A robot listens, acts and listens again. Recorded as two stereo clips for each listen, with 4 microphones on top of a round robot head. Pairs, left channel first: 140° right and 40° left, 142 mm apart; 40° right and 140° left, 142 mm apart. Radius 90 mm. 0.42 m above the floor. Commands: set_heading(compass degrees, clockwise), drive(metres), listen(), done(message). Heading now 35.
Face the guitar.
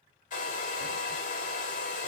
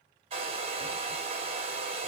listen()
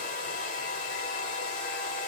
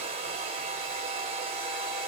listen()
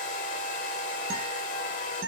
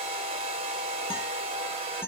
set_heading(5)
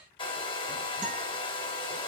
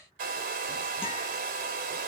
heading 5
listen()
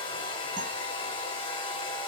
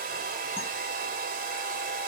listen()
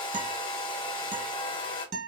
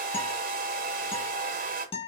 set_heading(355)
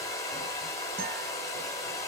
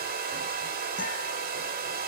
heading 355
listen()
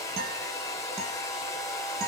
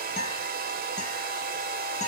done("Found it: a guitar, straight ahead.")